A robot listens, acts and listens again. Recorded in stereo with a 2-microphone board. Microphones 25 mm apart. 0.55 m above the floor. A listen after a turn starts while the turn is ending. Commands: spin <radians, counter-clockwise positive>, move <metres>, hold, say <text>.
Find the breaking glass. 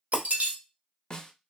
spin -1.31
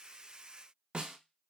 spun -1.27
hold
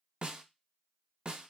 say I heard breaking glass, but can't make it out now. It was about straight ahead or 35° right.